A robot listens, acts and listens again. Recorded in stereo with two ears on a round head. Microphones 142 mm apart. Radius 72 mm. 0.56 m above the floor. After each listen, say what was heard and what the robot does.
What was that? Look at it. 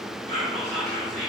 The whispering: about 55° right or 125° right. Turn 55° right.
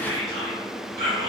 So it is at 65° right. Turn 65° right.
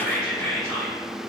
The whispering is now 10° left. Turn 10° left.
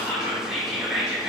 Facing the whispering.